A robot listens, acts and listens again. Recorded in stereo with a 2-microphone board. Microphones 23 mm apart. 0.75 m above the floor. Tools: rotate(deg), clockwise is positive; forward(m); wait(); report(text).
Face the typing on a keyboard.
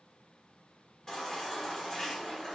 wait()
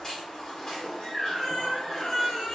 wait()
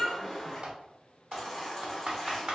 rotate(55)
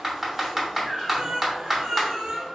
report("Found it: typing on a keyboard, straight ahead.")